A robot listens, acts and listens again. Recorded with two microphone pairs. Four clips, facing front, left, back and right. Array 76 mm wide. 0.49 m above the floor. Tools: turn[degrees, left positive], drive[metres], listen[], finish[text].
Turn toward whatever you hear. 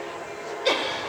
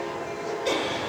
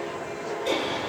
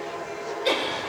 Thought: The laughter: 20° right.
Action: turn[-20]
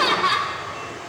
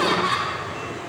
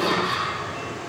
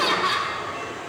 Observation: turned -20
Action: finish[Facing the laughter.]